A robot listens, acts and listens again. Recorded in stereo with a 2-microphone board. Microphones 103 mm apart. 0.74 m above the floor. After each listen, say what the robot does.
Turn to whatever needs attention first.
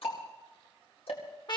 Keep listening.
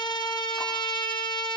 Keep listening.
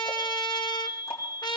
Turn 30° left.
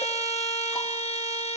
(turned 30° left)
Keep listening.
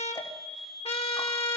Facing the fire alarm, 2 to 4 m away.